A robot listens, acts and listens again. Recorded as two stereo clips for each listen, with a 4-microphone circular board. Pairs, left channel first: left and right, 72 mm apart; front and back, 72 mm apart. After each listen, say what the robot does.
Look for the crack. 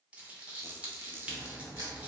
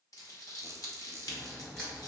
Turn 75° right.
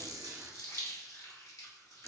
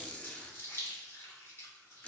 Facing where the crack came from. I can't hear it now.